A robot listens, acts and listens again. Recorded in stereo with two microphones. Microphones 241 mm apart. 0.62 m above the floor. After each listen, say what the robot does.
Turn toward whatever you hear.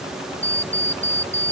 Turn 50° left.
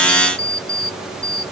Turn 85° left.
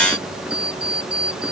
Found it: an alarm clock, straight ahead.